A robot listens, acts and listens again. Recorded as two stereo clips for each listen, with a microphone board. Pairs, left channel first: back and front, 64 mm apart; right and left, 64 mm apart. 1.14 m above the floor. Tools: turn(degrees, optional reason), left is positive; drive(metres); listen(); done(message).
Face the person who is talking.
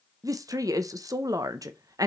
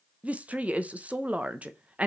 turn(degrees=25, reason="The woman speaking: 25° left.")
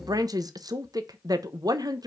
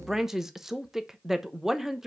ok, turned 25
turn(degrees=10, reason="The woman speaking is now 10° left.")
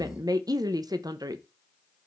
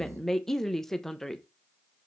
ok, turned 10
done("Found it: a woman speaking, straight ahead, under 1 m away.")